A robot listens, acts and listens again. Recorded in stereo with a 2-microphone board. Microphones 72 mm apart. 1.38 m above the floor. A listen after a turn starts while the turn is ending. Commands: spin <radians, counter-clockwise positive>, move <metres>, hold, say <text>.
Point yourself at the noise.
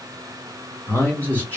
spin 0.35
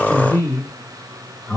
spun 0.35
spin 0.52
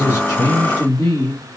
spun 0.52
spin 2.18
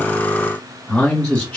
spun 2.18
spin 0.26
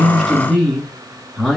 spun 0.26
say Found it: a man speaking, straight ahead.